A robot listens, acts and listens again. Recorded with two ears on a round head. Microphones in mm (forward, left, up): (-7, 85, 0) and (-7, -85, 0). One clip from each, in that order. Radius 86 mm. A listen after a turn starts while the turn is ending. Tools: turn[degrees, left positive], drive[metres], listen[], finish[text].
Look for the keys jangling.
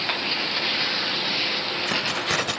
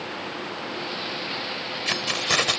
Thought: The keys jangling: about 25° right or 155° right.
Action: turn[-25]
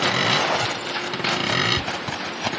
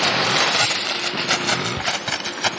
Thought: So it is at 125° right.
Action: turn[-125]
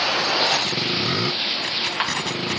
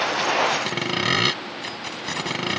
Thought: The keys jangling is now 15° left.
Action: turn[15]
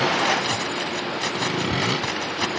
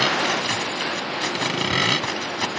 Action: finish[Facing the keys jangling.]